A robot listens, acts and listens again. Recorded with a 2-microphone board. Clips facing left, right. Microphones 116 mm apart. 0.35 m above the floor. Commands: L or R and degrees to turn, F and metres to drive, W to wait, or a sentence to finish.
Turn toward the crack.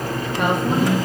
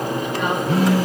W
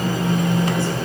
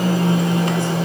W
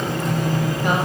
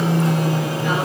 I can't make out a crack to turn to.